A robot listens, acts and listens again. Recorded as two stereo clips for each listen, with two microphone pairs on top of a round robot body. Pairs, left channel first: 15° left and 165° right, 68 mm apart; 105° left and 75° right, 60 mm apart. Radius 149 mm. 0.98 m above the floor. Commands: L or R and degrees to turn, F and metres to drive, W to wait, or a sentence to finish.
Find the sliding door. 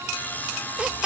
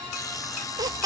W
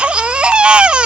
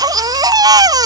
W
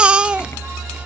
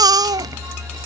I can't make out a sliding door, only a baby crying.